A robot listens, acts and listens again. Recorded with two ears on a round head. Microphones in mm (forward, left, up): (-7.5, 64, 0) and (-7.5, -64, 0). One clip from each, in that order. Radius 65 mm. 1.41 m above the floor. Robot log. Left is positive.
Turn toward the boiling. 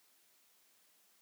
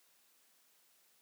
cmd idle
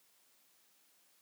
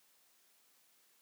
cmd idle
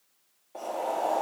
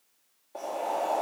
cmd yaw +30
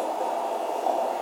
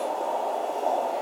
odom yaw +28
note: So it is at 155° left.
cmd yaw +155
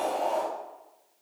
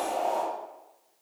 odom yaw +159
end: Facing the boiling, 1 to 2 m away.